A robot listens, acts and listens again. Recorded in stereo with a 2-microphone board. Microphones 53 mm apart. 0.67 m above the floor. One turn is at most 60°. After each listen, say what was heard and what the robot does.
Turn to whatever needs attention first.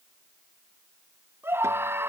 The scream: about 45° right or 135° right. Turn 45° right.
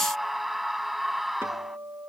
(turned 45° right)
Found it: a scream, straight ahead.